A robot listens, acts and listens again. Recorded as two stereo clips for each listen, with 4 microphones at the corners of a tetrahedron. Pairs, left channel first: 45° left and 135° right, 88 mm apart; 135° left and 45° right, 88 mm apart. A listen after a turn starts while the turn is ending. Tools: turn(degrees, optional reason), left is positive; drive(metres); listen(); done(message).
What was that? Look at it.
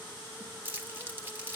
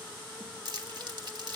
turn(degrees=-70, reason="The crumpling: 70° right.")
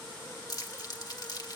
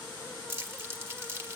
turn(degrees=10, reason="The crumpling is now 10° left.")
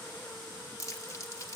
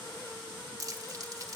done("Found it: crumpling, straight ahead.")